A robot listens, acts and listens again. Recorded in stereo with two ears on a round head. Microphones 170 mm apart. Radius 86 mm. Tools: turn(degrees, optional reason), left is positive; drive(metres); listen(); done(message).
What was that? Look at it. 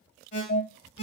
turn(degrees=45, reason="The alarm: about 45° left or 135° left.")
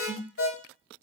turn(degrees=85, reason="So it is at 85° left.")
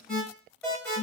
done("Found it: an alarm, straight ahead, 1 to 2 m away.")